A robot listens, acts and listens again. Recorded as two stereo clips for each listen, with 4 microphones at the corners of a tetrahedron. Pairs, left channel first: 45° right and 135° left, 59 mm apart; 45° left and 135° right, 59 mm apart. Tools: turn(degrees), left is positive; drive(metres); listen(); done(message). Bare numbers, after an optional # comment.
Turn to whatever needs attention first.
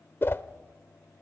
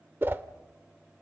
listen()
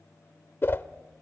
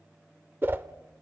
listen()
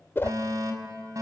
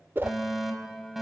# The fire alarm: 140° left.
turn(140)
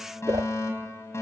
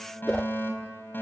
done("Found it: a fire alarm, straight ahead.")